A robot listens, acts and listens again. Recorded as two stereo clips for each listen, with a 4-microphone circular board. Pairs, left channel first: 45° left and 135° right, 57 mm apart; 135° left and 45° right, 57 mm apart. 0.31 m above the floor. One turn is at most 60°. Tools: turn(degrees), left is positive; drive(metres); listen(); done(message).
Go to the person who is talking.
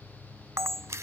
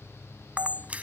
listen()
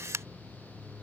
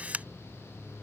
listen()
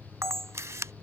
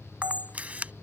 done("I can't make out anyone speaking, only a camera shutter.")